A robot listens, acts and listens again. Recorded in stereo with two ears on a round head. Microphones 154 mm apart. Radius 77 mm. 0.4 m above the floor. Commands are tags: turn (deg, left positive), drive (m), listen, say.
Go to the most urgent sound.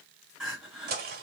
<turn deg="30"/>
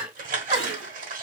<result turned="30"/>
<turn deg="-30"/>
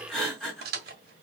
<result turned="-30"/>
<drive m="1.0"/>
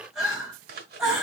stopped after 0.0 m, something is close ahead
<say>Something is in my way. I am facing the crying but have not reached it.</say>